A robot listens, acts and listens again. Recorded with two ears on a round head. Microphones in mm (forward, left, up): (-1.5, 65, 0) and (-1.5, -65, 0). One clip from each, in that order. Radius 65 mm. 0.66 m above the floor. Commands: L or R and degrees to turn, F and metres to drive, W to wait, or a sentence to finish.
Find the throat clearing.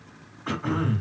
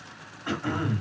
R30
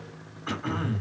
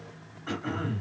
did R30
L20
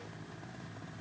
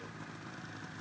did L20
W
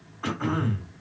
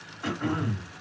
Found it: throat clearing, straight ahead, 1 to 2 m away.